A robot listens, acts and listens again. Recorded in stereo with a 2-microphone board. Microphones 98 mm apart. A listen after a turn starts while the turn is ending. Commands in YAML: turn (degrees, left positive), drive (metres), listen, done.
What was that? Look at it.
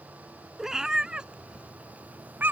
turn: -20
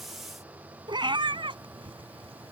turn: -120
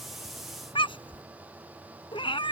turn: 60
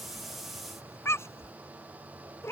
turn: 25
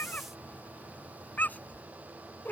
turn: 15
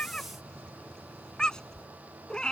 done: "Facing the cat meowing."